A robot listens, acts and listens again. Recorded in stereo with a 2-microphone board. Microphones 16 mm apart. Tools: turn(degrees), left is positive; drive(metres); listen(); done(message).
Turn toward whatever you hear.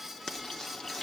turn(degrees=50)
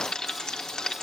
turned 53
turn(degrees=70)
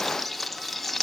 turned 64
done("Facing the frying.")